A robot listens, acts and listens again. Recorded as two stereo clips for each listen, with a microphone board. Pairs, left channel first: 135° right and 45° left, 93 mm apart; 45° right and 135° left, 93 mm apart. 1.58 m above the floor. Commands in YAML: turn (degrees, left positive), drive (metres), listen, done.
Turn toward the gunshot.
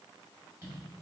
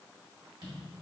listen: true
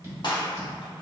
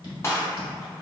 turn: -105
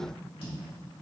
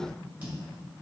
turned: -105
done: "I heard a gunshot from this way, but can't make it out now."